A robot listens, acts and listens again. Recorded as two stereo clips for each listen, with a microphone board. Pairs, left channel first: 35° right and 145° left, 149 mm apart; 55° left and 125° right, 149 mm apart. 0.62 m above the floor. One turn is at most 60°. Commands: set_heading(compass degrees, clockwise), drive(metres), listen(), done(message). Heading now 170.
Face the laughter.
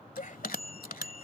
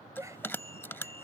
set_heading(225)
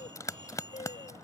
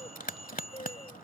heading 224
done("Facing the laughter.")